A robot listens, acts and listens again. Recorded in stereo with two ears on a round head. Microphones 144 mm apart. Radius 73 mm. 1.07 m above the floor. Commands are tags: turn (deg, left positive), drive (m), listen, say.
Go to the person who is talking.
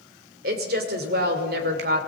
<turn deg="-60"/>
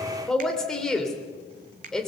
<drive m="1.0"/>
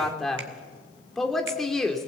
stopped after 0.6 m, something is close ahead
<say>Blocked. The woman speaking is further on, straight ahead.</say>